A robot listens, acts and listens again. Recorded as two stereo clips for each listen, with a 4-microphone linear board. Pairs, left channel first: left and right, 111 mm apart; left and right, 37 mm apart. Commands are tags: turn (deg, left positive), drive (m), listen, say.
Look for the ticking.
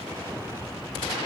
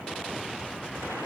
<listen/>
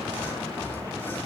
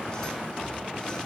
<listen/>
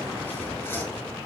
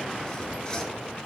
<say>I can't make out ticking.</say>